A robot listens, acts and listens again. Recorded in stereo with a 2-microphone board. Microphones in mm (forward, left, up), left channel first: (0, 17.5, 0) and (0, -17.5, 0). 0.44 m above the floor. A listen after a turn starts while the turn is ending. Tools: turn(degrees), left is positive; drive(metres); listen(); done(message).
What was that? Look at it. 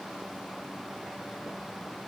listen()
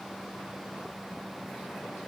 listen()
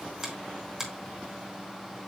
turn(degrees=-30)
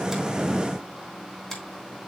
turn(degrees=20)
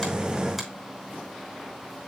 listen()
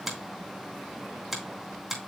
done("Found it: a finger snap, straight ahead, 2 to 4 m away.")